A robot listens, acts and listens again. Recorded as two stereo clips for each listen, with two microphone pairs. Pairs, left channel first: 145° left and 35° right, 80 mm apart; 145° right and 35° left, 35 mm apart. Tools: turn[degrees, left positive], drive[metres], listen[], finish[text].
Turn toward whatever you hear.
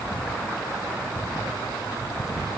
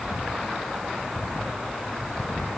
Action: listen[]
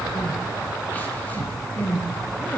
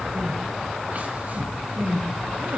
Thought: The crying: 75° left.
Action: turn[75]
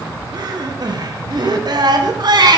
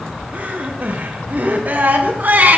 Action: finish[Found it: crying, straight ahead.]